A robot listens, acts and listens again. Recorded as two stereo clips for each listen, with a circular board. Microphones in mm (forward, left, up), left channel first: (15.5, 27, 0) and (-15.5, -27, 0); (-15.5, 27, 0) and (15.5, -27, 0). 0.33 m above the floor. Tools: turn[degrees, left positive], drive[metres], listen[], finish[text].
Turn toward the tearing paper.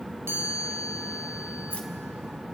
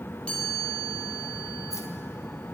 Action: listen[]
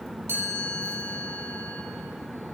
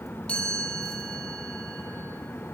Action: listen[]
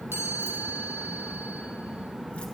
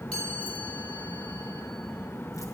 Action: finish[I can't make out tearing paper, only a chime.]